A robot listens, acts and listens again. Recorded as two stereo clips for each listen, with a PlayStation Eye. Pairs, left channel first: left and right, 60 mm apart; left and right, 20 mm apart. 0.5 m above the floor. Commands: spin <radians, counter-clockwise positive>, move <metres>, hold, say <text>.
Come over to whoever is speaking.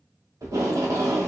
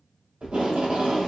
spin -0.79
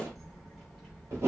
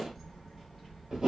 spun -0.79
move 1.0
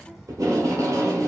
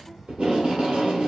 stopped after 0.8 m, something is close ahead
say Arrived at the child speaking, straight ahead.